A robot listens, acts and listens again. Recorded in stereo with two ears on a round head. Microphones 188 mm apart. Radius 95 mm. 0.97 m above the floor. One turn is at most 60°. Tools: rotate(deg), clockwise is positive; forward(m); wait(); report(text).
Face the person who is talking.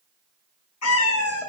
wait()
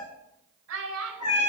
rotate(60)
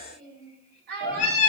rotate(50)
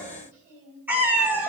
rotate(15)
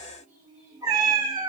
wait()
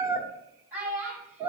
rotate(10)
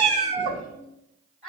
report("Found it: a child speaking, straight ahead, 2 to 4 m away.")